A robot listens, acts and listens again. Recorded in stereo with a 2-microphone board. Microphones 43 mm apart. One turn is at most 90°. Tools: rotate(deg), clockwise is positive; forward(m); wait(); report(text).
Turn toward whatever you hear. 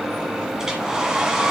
rotate(30)
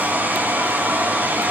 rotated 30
rotate(90)
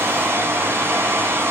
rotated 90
rotate(75)
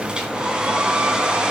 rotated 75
rotate(20)
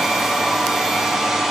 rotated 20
report("Facing the hair dryer, 2 to 4 m away.")